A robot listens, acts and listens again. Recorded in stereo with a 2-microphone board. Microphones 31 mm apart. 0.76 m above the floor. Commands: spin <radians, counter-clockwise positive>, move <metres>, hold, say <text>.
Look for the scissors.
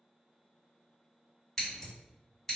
spin 0.52
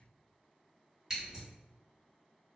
spin -0.44
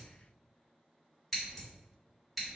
say Found it: scissors, straight ahead, 1 to 2 m away.